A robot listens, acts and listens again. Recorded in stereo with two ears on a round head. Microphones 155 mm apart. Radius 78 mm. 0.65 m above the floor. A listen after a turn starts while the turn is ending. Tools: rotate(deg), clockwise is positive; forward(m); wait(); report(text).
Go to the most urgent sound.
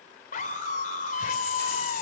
rotate(-50)
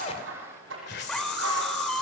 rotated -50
forward(1.0)
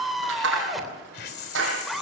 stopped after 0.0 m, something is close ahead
report("Blocked. The scream is further on, straight ahead.")